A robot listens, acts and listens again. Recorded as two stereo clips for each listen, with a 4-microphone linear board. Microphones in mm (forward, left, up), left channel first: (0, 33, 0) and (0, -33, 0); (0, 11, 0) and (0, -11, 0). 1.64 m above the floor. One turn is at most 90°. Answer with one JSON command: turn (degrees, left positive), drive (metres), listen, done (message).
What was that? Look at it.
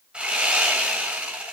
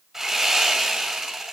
{"turn": -15}
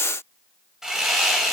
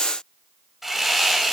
{"done": "Facing the sawing."}